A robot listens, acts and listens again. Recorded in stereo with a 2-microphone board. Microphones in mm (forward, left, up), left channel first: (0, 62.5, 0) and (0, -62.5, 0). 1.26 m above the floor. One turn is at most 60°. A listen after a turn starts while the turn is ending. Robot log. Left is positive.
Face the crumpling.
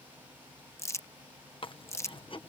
note: The crumpling: about 20° left or 160° left.
cmd yaw +20
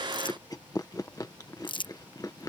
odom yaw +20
note: So it is at 135° left.
cmd yaw +60
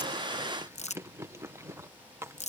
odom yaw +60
note: The crumpling is now 80° left.
cmd yaw +60
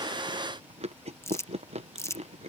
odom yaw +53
note: The crumpling is now 25° left.
cmd yaw +25
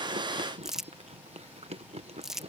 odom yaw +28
end: Found it: crumpling, straight ahead.